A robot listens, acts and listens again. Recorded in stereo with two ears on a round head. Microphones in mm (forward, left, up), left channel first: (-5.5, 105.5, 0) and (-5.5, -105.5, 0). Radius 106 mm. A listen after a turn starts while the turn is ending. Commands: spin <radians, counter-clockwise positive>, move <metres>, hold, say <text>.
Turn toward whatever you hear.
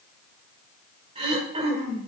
spin -0.44
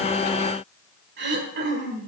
spin -2.27
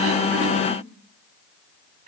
hold
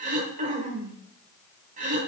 spin -0.61
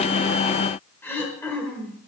spin 0.17
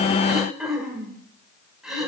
say Facing the throat clearing.